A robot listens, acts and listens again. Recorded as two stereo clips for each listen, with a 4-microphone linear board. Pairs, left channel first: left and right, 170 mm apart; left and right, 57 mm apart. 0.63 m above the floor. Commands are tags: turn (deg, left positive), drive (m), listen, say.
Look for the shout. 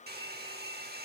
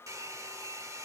<listen/>
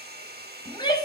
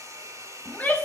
<turn deg="30"/>
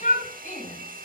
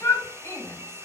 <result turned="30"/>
<turn deg="120"/>
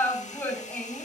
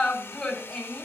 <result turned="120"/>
<turn deg="10"/>
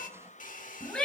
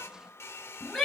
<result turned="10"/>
<say>Facing the shout, over 4 m away.</say>